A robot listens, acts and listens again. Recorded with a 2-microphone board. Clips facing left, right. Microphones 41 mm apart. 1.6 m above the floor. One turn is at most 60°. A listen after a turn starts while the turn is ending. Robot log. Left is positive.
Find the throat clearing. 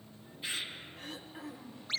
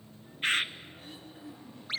cmd yaw +60
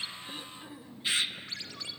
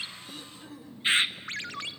note: So it is at 15° left.
cmd yaw +15
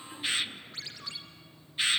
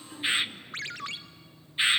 cmd idle
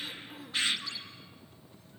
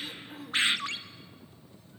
end: Facing the throat clearing, 1 to 2 m away.